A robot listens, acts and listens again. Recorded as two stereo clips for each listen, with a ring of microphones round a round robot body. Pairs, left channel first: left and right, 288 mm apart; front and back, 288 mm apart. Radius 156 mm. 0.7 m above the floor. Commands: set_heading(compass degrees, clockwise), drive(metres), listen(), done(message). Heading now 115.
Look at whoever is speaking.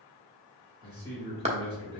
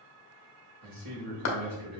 set_heading(280)
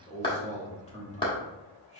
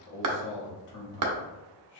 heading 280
set_heading(260)
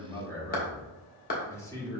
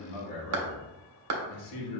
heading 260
set_heading(250)
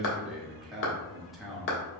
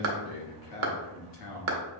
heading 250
done("Facing the man speaking, 1 to 2 m away.")